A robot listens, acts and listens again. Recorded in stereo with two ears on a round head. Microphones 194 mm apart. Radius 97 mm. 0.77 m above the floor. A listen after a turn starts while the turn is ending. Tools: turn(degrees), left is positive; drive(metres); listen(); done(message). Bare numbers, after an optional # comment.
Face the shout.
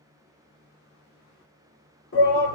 # The shout: about 55° left or 125° left.
turn(55)
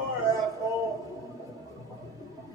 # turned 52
# So it is at 15° left.
turn(15)
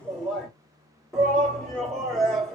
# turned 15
done("Facing the shout, 1 to 2 m away.")